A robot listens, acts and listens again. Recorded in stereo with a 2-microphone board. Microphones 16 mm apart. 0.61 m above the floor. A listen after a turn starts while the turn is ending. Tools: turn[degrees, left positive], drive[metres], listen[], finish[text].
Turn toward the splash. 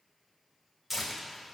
Action: listen[]
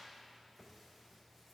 Action: listen[]
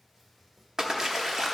Thought: The splash: about 45° right or 135° right.
Action: turn[-45]
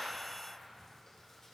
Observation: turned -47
Action: listen[]
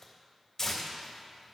Action: finish[I heard a splash, but can't make it out now. It was about straight ahead or 85° right.]